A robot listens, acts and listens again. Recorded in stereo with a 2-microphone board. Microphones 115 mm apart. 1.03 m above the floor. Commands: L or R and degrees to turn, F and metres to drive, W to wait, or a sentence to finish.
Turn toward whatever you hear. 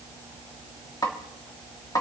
L30
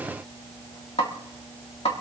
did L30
L115
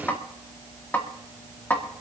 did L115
L20
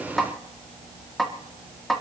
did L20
Found it: a snare drum, straight ahead, 1 to 2 m away.